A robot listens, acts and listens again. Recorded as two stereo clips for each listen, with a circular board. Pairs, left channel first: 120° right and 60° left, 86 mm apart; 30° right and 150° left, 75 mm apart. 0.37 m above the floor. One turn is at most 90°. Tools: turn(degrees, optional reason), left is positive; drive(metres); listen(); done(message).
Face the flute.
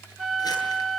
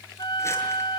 turn(degrees=-30, reason="The flute: 30° right.")
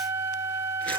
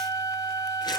done("Facing the flute, 1 to 2 m away.")